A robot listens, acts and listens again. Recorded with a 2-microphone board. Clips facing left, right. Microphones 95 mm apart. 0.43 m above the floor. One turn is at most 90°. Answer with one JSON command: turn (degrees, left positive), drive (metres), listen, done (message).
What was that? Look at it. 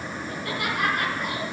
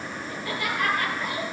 {"turn": 65}
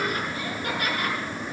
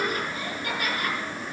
{"turn": 50}
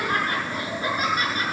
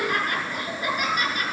{"turn": 35}
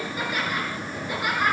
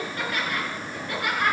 {"turn": 10}
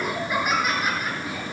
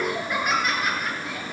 {"done": "Facing the laughter, over 4 m away."}